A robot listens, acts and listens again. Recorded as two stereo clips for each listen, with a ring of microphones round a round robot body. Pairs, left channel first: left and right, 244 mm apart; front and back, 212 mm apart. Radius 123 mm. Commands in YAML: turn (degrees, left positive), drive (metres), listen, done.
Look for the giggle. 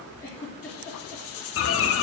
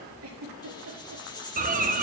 turn: 170
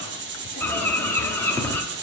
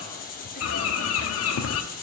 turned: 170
listen: true
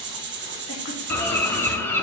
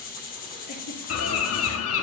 listen: true
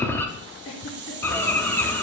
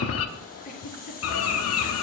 turn: 50
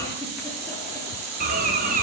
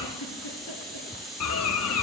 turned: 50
listen: true
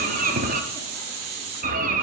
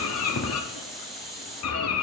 listen: true
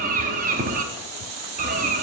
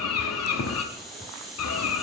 done: "I heard a giggle from this way, but can't make it out now."